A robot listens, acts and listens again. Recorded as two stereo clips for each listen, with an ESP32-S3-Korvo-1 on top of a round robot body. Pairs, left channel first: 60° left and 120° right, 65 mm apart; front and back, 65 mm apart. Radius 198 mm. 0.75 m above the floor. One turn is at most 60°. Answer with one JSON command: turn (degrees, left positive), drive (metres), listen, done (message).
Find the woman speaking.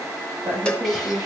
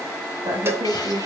{"turn": -60}
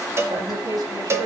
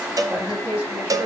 {"turn": -60}
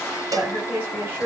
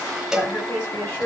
{"turn": -55}
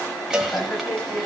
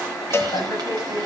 {"done": "Facing the woman speaking."}